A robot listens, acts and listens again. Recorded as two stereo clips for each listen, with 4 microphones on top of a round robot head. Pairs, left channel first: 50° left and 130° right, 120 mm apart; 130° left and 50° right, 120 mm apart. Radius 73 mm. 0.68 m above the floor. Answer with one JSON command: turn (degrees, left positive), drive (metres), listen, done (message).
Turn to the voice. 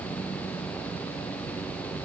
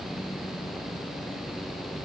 {"listen": true}
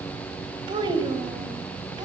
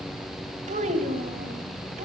{"turn": -75}
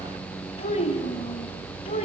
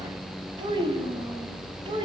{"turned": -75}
{"done": "Found it: a child speaking, straight ahead, over 4 m away."}